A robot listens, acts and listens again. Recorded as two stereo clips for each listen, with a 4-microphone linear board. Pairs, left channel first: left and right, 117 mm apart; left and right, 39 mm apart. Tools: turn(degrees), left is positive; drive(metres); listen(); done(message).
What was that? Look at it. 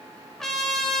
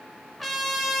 turn(degrees=30)
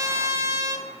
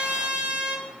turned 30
turn(degrees=-25)
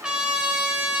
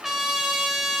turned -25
turn(degrees=-10)
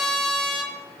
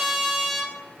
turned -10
done("Found it: a trumpet, straight ahead, under 1 m away.")